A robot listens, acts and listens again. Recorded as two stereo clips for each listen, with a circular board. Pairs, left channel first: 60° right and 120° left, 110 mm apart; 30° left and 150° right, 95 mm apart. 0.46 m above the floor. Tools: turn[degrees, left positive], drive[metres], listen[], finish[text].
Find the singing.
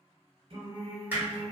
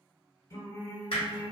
Thought: The singing: 85° left.
Action: turn[85]
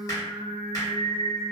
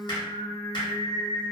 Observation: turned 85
Thought: The singing is now 35° left.
Action: turn[35]
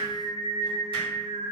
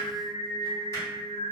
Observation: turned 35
Action: finish[Found it: singing, straight ahead, under 1 m away.]